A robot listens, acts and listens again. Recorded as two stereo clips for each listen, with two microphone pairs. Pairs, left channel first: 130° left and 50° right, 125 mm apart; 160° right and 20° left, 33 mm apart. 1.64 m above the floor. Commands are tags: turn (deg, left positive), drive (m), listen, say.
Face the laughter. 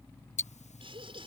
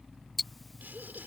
<say>Facing the laughter.</say>